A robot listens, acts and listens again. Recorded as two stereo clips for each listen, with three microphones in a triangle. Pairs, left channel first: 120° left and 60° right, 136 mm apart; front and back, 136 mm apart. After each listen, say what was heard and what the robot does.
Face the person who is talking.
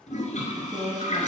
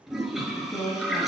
The woman speaking: 35° right. Turn 35° right.
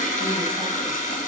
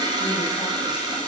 Keep listening.
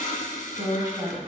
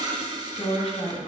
Facing the woman speaking.